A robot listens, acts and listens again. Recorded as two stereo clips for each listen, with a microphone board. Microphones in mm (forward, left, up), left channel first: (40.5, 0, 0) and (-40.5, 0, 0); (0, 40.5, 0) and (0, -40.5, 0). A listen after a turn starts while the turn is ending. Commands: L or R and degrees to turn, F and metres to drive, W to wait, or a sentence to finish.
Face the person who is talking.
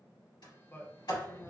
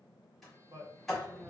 R60
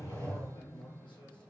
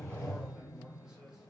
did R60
W
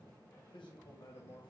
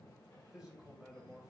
R10
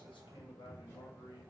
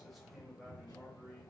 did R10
W
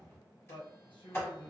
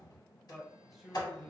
Facing the man speaking, under 1 m away.